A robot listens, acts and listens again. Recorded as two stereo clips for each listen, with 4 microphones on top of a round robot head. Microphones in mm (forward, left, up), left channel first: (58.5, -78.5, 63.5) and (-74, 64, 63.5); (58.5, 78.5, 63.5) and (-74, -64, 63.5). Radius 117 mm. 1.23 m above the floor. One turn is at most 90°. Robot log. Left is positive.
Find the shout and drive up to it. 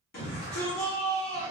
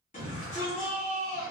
cmd fwd 1.0
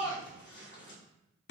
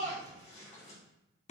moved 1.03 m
note: The shout is now 10° right.
cmd yaw -10
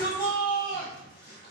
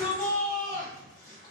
cmd fwd 1.0
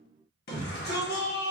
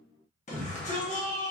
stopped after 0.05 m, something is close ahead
note: The shout is now 10° right.
cmd yaw -10
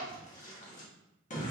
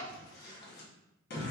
end: Arrived at the shout, straight ahead.